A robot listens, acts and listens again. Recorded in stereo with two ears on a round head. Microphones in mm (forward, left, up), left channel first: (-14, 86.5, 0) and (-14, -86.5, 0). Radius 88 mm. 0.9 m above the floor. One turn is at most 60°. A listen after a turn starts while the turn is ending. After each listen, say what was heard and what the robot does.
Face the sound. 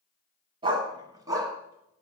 The dog barking: about 15° right or 165° right. Turn 15° right.
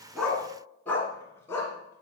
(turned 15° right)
So it is at 15° left. Turn 15° left.
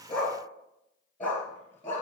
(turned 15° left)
The dog barking is now 10° left. Turn 10° left.
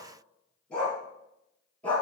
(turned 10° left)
Facing the dog barking.